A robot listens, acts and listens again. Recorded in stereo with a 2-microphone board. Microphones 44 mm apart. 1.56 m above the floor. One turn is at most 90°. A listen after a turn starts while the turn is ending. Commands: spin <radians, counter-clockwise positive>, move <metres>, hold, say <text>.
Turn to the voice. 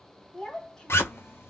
spin 0.52
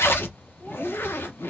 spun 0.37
hold
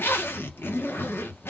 hold
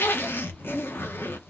say I heard a child speaking, but can't make it out now. It was about 10° right or 145° left.